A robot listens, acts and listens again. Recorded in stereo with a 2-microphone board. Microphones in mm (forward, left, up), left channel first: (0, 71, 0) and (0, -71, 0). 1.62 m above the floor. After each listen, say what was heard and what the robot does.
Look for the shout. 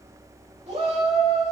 The shout: about 50° right or 130° right. Turn 50° right.
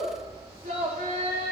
So it is at 75° right. Turn 75° right.
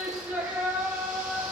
The shout is now 20° right. Turn 20° right.
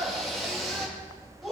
Facing the shout, 2 to 4 m away.